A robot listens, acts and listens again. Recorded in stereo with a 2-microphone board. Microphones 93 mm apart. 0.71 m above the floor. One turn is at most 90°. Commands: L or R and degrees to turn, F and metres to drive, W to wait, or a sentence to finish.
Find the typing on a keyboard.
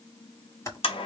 L30
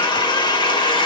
W
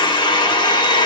W
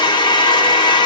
I heard typing on a keyboard, but can't make it out now. It was about straight ahead or 120° left.